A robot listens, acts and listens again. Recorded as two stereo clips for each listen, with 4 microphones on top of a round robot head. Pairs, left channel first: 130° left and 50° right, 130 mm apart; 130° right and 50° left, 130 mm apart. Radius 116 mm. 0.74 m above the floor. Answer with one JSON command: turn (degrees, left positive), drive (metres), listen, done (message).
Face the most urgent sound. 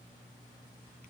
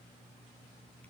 {"listen": true}
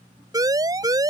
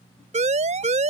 {"turn": 15}
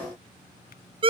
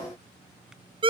{"done": "Facing the siren."}